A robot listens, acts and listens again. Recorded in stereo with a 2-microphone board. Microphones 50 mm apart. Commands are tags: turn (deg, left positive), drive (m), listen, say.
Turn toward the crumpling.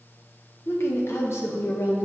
<listen/>
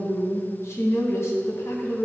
<listen/>
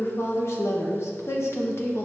<say>I can't make out crumpling, only a woman speaking.</say>